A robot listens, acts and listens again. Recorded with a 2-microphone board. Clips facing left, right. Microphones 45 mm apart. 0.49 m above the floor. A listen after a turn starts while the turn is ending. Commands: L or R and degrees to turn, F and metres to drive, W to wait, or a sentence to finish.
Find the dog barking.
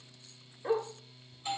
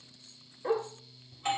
R30
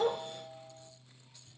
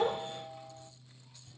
W
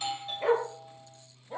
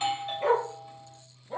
L30
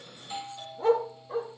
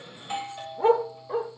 R35
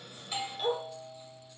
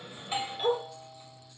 Found it: a dog barking, straight ahead, 2 to 4 m away.